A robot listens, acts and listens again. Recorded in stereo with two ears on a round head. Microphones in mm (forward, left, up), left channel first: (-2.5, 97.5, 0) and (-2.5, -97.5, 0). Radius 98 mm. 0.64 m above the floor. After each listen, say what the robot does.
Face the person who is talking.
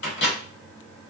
Keep listening.
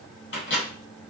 Keep listening.
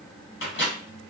I can't make out anyone speaking, only a microwave.